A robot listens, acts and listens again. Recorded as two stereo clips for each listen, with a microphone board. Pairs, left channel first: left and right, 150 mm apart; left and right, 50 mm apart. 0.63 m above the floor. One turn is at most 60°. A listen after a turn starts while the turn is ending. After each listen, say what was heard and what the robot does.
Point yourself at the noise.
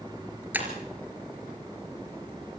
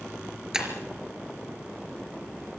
Turn 30° right.
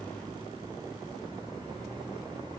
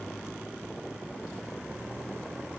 Keep listening.
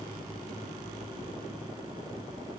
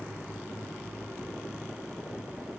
I heard breaking glass, but can't make it out now. It was about 20° left or 140° right.